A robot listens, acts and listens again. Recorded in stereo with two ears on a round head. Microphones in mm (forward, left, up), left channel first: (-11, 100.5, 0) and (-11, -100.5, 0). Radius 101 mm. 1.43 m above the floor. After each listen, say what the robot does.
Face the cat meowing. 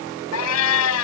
Turn 70° left.
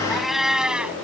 Facing the cat meowing.